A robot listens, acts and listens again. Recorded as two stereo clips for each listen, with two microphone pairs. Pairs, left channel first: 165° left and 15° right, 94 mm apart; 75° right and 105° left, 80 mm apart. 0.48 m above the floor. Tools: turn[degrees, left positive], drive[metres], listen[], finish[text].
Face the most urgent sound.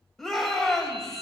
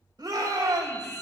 Thought: The shout: 80° left.
Action: turn[80]
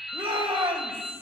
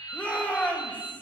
Action: finish[Found it: a shout, straight ahead.]